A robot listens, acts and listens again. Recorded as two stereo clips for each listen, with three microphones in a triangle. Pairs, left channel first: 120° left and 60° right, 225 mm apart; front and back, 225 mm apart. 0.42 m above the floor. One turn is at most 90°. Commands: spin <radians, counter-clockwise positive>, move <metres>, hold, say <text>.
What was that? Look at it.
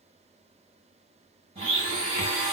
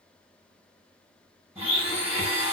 spin -1.57
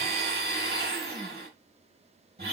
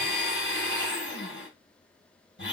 spin -0.44
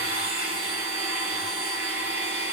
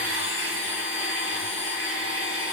say Found it: a blender, straight ahead, 2 to 4 m away.